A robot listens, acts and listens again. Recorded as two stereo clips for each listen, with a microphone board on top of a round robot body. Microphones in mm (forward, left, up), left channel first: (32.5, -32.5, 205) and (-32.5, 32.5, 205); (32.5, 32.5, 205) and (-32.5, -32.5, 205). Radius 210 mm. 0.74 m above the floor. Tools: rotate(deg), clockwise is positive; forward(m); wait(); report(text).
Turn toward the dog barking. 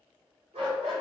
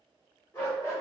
rotate(-110)
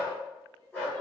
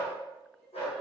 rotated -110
rotate(-30)
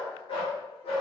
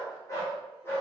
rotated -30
rotate(25)
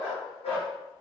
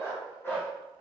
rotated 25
rotate(25)
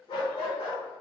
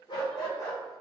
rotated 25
rotate(10)
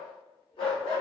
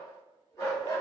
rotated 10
rotate(15)
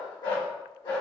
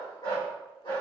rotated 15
report("Found it: a dog barking, straight ahead, 1 to 2 m away.")